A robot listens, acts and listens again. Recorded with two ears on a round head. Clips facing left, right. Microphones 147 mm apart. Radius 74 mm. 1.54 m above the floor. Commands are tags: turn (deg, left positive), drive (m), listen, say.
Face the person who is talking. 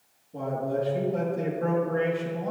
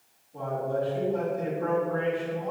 <turn deg="55"/>
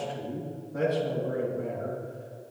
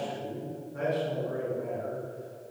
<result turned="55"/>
<turn deg="70"/>
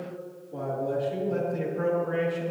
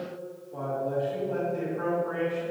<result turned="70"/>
<turn deg="30"/>
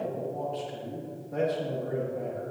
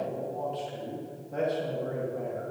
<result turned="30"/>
<say>Facing the man speaking, 2 to 4 m away.</say>